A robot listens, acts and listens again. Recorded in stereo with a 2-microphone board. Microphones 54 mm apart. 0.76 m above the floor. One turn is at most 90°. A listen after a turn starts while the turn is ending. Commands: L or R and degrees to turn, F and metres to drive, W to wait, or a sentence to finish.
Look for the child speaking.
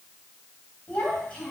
L20
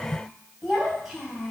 Found it: a child speaking, straight ahead, over 4 m away.